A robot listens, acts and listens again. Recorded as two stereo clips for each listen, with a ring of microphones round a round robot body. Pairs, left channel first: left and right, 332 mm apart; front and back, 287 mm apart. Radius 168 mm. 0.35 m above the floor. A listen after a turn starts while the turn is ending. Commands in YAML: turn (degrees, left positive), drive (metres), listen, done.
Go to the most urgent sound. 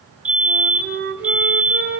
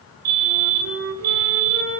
turn: -175
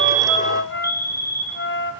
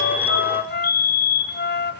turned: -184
turn: 10
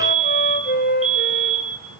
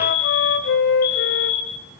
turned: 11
drive: 1.0
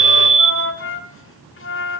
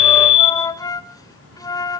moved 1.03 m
drive: 1.0
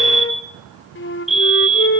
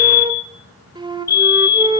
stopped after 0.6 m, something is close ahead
done: "I am next to the fire alarm."